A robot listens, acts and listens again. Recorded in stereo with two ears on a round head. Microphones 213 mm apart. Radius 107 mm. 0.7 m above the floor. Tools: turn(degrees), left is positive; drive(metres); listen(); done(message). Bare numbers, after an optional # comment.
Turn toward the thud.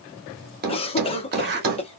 # The thud: about 40° right or 140° right.
turn(-40)
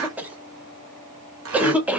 listen()
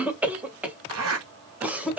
done("I heard a thud, but can't make it out now. It was about straight ahead or 100° right.")